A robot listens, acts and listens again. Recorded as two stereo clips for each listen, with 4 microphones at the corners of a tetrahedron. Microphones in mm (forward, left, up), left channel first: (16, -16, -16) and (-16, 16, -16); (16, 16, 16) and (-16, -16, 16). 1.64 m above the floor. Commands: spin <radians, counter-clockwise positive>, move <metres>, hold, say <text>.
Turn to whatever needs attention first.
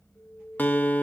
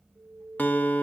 spin -1.75
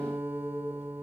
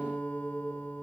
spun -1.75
hold
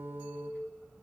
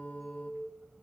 say Facing the alarm.